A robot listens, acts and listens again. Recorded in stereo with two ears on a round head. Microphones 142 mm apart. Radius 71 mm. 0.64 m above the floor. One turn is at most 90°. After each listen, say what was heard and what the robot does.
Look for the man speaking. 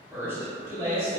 The man speaking: about 25° right or 155° right. Turn 25° right.
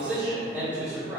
The man speaking: about 20° right or 160° right. Turn 20° right.
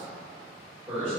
The man speaking: about 20° right or 160° right. Turn 20° right.
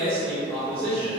Turn 30° right.
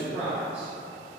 So it is at 10° left. Turn 10° left.
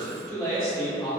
Found it: a man speaking, straight ahead, 2 to 4 m away.